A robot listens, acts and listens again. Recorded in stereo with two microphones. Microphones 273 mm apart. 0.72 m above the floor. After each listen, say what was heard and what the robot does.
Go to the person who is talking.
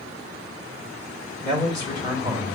The man speaking: about 40° left or 140° left. Turn 40° left.
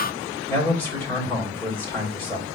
So it is at 10° left. Turn 10° left.
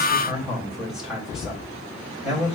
Drive 1.0 m forward.
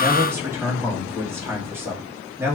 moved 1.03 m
The man speaking is now 10° right. Turn 10° right.
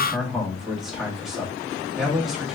Drive 1.0 m forward.
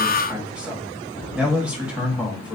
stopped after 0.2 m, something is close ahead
I am next to the man speaking.